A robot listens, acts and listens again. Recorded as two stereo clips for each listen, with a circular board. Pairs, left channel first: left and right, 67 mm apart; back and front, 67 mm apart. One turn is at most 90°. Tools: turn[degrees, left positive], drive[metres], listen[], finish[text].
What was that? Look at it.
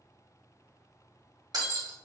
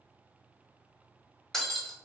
Thought: The breaking glass: 95° right.
Action: turn[-90]
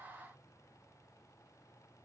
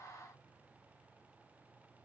Action: finish[I heard breaking glass from this way, but can't make it out now.]